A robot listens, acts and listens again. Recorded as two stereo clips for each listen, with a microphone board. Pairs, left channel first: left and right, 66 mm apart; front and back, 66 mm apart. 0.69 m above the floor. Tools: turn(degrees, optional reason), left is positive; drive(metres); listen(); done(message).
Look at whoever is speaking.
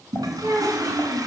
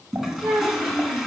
turn(degrees=-135, reason="The child speaking: 135° right.")
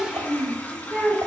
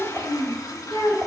done("Facing the child speaking.")